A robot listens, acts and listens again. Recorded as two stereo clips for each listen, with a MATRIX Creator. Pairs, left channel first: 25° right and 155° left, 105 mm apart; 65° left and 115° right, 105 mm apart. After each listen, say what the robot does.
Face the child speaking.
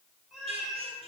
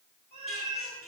Keep listening.
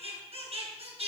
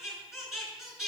Keep listening.
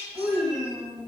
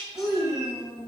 Turn 150° right.
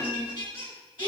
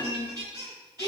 Turn 10° right.
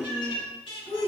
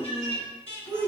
Found it: a child speaking, straight ahead, over 4 m away.